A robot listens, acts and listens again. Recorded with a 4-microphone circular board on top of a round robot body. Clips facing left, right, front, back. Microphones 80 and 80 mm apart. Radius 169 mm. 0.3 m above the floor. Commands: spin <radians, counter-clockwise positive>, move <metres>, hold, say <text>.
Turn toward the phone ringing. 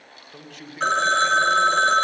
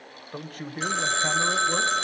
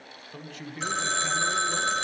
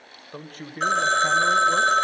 spin 2.36
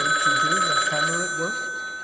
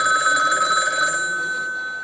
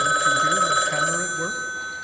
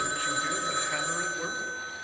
spin -0.35
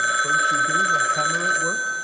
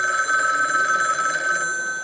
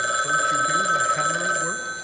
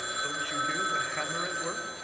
say Found it: a phone ringing, straight ahead.